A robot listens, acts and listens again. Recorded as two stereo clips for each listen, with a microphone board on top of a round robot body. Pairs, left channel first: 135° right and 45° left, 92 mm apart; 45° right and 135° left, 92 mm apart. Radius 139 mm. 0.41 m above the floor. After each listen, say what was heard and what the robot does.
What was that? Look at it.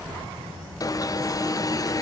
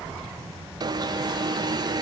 The alarm: 175° left. Turn 175° left.
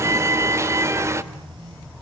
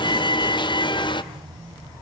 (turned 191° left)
The alarm is now 15° right. Turn 15° right.
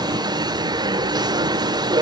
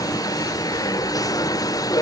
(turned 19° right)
Facing the alarm.